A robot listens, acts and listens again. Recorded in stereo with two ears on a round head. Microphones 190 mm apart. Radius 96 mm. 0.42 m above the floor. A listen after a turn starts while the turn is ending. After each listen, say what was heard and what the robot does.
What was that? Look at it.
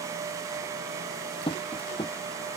The tapping: about 25° left or 155° left. Turn 25° left.
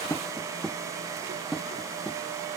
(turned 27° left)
Found it: tapping, straight ahead.